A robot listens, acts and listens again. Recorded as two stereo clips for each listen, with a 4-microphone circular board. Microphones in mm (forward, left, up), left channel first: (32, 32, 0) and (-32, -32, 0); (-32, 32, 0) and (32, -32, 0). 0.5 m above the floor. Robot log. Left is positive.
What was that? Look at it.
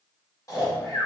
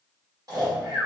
end: Facing the snoring, 1 to 2 m away.